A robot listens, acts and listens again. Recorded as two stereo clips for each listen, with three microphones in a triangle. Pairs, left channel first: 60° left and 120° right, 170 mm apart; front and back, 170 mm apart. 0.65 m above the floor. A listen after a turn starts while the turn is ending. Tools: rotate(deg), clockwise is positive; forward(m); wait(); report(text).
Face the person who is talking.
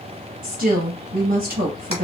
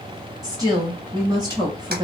rotate(120)
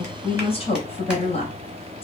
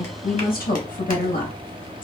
rotate(-10)
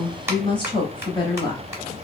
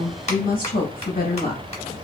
report("Found it: a woman speaking, straight ahead.")